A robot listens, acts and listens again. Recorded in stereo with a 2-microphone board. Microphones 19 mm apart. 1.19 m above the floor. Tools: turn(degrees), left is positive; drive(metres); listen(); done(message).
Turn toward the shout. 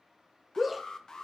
turn(degrees=-30)
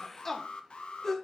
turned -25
turn(degrees=25)
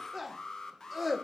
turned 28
done("Facing the shout, under 1 m away.")